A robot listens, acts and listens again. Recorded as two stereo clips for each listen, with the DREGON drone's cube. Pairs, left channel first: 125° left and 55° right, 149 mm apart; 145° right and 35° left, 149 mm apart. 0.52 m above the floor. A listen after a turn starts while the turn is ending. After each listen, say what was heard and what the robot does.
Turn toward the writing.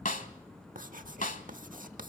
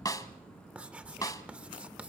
The writing: 45° right. Turn 45° right.
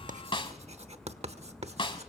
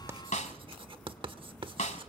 The writing is now 15° right. Turn 15° right.
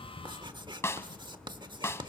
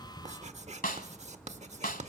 Found it: writing, straight ahead, 1 to 2 m away.